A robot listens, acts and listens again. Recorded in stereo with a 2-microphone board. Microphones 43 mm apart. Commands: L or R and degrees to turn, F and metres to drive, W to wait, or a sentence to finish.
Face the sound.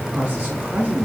R35
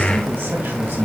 R115
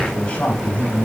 L30
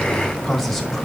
Facing the man speaking, 1 to 2 m away.